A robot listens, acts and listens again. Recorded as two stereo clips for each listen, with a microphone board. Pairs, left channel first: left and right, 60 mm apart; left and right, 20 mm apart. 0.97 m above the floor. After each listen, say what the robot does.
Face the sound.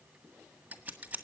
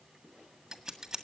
Turn 25° right.
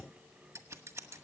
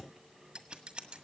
Turn 130° right.
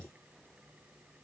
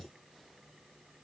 Keep listening.
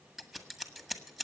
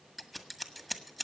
Found it: scissors, straight ahead, 1 to 2 m away.